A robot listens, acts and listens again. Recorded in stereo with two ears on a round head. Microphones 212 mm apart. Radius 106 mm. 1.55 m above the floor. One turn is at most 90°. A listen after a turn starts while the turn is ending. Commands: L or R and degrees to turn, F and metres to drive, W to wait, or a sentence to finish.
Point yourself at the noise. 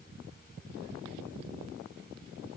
W
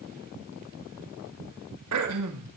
R75
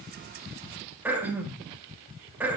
R10
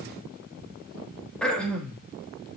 Found it: throat clearing, straight ahead.